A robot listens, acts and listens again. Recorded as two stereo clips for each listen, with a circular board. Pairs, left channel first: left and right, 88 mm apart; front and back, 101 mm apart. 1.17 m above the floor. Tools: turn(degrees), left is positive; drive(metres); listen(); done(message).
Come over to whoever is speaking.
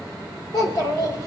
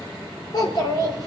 turn(degrees=45)
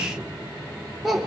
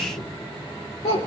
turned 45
drive(metres=1.0)
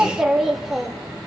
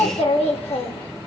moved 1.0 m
drive(metres=1.0)
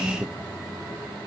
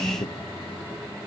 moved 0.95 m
turn(degrees=-25)
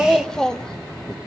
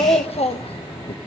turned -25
drive(metres=1.0)
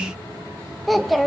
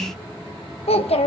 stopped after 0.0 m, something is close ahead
done("I am next to the child speaking.")